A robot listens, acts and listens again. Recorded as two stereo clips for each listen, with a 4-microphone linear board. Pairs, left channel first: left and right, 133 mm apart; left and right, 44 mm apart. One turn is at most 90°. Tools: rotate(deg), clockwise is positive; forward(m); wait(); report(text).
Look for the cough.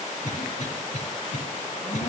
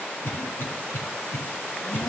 rotate(-70)
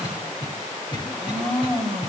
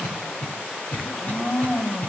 rotate(-35)
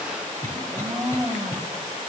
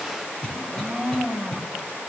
wait()
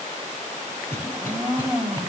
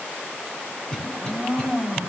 rotate(-20)
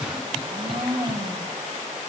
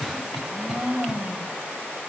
report("Facing the cough, over 4 m away.")